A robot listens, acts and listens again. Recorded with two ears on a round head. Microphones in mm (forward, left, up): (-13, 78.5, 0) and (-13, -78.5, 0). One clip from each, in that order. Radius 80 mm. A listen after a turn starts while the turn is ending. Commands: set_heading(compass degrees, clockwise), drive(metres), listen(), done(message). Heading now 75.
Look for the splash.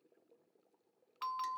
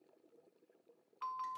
listen()
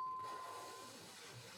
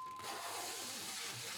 listen()
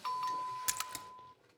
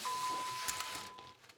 set_heading(45)
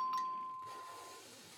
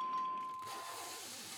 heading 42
listen()
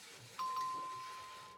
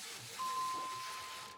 done("I heard a splash, but can't make it out now. It was about 5° right or 120° left.")